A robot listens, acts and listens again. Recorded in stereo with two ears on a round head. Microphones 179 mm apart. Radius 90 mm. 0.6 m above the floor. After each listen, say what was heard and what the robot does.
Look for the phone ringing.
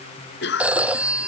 Turn 30° right.
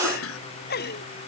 Keep listening.
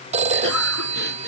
So it is at 145° right. Turn 145° right.
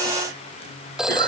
Found it: a phone ringing, straight ahead.